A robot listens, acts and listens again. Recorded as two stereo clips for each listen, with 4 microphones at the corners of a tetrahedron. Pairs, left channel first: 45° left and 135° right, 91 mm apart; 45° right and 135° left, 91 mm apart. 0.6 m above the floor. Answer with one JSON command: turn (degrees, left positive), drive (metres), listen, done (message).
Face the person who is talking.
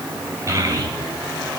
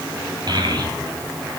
{"turn": 170}
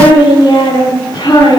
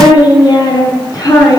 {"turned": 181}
{"done": "Facing the child speaking."}